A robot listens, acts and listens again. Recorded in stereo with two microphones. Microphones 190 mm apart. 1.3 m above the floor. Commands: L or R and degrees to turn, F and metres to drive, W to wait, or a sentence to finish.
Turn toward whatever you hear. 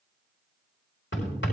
L90
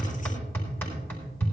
L10
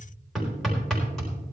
Facing the hammering, over 4 m away.